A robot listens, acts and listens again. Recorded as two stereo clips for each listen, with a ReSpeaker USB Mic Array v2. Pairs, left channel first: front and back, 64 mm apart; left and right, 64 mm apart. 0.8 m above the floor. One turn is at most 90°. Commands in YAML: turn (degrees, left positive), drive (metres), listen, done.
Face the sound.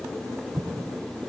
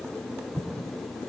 turn: -90
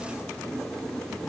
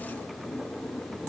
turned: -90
turn: -60
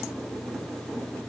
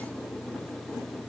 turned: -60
done: "Facing where the explosion came from. I can't hear it now."